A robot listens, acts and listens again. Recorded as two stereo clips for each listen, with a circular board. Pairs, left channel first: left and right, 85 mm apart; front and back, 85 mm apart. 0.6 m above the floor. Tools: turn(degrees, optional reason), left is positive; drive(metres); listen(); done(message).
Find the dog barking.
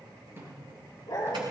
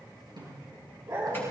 turn(degrees=130, reason="The dog barking: 130° left.")
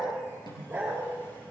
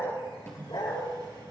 turn(degrees=-15, reason="The dog barking is now 15° right.")
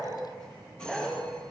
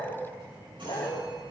done("Found it: a dog barking, straight ahead, over 4 m away.")